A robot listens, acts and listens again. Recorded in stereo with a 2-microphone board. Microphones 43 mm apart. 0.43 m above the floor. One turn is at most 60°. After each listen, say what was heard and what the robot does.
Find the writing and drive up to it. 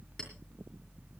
Keep listening.
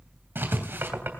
The writing: about 60° right or 120° right. Turn 60° right.
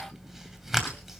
So it is at 10° right. Turn 10° right.
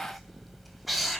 Drive 1.0 m forward.
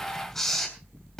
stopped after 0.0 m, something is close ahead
Something is in my way. I am facing the writing but have not reached it.